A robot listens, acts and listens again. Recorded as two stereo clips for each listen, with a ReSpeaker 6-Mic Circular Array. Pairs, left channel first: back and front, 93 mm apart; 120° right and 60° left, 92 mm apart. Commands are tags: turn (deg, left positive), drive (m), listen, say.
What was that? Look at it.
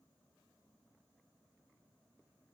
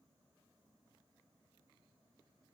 <listen/>
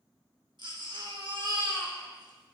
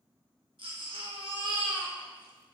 <turn deg="35"/>
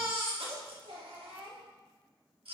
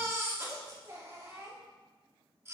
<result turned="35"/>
<say>Found it: a baby crying, straight ahead.</say>